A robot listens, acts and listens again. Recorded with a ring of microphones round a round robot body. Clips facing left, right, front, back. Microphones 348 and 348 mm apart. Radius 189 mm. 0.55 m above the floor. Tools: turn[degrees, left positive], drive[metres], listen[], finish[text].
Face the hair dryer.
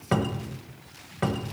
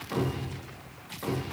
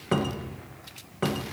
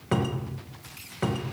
Action: listen[]
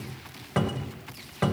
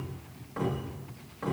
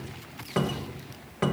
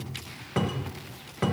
Action: listen[]
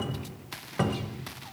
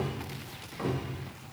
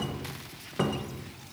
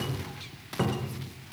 Action: finish[I can't make out a hair dryer, only a cupboard door.]